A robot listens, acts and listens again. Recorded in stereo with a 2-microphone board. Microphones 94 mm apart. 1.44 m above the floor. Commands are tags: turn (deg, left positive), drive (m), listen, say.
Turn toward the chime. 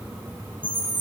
<turn deg="50"/>
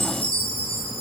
<turn deg="75"/>
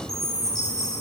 <say>Found it: a chime, straight ahead.</say>